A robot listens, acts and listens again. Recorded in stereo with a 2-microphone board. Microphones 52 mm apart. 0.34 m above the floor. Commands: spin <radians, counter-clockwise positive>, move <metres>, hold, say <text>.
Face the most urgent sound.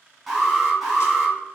spin -0.52
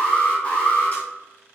spin 0.44
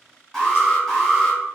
spin 0.17
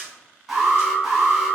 say Found it: an alarm, straight ahead, 1 to 2 m away.